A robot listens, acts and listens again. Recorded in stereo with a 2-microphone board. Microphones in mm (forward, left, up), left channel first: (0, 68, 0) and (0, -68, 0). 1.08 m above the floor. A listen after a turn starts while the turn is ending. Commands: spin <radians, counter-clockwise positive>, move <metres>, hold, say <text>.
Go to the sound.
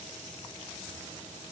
hold
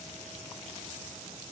hold
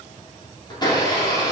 spin 0.52
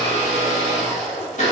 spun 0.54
spin 2.09
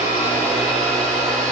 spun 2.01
move 1.0
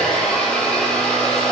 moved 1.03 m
move 1.0
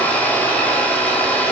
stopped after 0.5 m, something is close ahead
spin 0.17
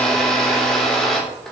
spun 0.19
say I am next to the blender.